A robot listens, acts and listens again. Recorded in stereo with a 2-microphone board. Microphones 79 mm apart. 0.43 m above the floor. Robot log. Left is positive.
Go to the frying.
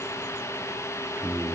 cmd idle
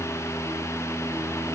cmd idle
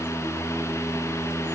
end: I can't make out frying to turn to.